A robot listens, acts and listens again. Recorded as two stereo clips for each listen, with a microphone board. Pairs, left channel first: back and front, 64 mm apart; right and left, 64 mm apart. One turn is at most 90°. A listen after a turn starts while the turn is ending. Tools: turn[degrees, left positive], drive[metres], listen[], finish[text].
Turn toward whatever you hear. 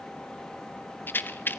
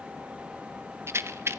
Thought: The rattle: 130° left.
Action: turn[90]
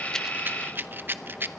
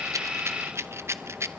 Thought: The rattle is now 50° left.
Action: turn[50]
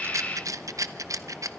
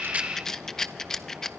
Thought: The rattle is now 10° right.
Action: turn[-10]
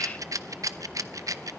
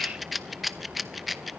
Action: finish[Facing the rattle.]